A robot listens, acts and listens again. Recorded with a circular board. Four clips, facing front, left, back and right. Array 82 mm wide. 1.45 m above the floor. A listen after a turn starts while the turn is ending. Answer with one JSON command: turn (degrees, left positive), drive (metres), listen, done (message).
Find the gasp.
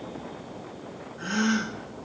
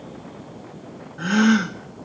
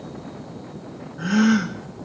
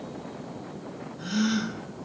{"turn": 105}
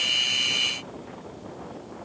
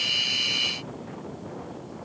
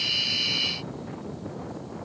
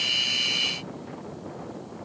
{"done": "Facing where the gasp came from. I can't hear it now."}